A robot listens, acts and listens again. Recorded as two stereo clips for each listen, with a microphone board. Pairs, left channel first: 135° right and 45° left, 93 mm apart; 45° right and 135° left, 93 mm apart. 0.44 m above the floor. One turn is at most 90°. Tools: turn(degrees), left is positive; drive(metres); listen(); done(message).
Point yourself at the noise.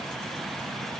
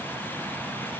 listen()
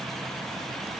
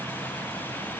listen()
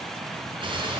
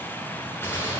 turn(degrees=20)
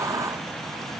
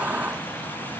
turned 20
done("Facing where the gunshot came from. I can't hear it now.")